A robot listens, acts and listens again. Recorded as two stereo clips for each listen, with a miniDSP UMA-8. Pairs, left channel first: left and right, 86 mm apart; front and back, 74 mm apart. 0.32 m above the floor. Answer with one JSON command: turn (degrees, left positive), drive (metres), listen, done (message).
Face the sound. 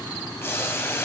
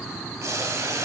{"turn": 145}
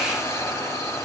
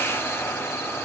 {"turn": 45}
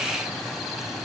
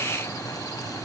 {"listen": true}
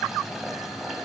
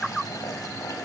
{"listen": true}
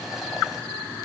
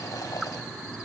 {"done": "Facing where the boiling came from. I can't hear it now."}